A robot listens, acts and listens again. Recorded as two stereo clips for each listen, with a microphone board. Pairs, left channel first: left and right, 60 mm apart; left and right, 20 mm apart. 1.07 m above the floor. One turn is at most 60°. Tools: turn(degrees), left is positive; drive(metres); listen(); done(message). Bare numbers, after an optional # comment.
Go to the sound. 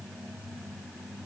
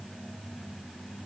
listen()
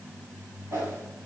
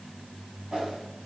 # The whoosh: about 65° right or 115° right.
turn(-60)
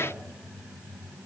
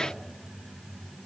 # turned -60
listen()
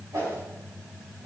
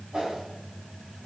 # So it is at 55° right.
turn(-55)
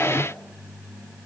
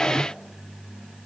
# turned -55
listen()
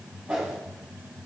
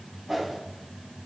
# The whoosh is now 15° right.
turn(-15)
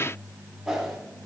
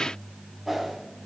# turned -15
drive(1.0)
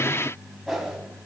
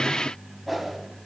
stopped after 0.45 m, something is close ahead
done("Blocked. The whoosh is further on, straight ahead.")